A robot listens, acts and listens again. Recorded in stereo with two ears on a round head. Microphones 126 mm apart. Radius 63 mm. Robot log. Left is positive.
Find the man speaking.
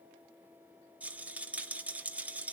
cmd idle
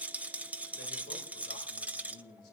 note: The man speaking: about 75° left or 105° left.
cmd yaw +75
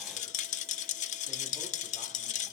cmd idle
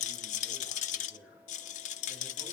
cmd idle
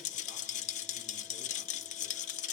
end: I heard a man speaking, but can't make it out now. It was about straight ahead or 30° left.